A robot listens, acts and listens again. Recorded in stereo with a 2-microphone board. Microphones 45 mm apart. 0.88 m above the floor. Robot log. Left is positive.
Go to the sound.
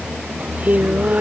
note: The singing: about 35° right or 145° right.
cmd yaw -35
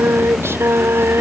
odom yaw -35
note: So it is at 105° right.
cmd yaw -105
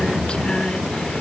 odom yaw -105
cmd idle
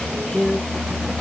note: The singing is now 20° left.
cmd yaw +20
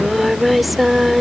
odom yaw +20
cmd fwd 1.0
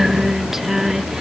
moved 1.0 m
note: The singing is now 10° right.
cmd yaw -10
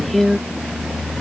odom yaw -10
cmd fwd 1.0
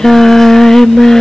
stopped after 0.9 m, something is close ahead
note: The singing is now 10° left.
cmd yaw +10
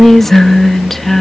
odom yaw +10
end: Arrived at the singing, straight ahead.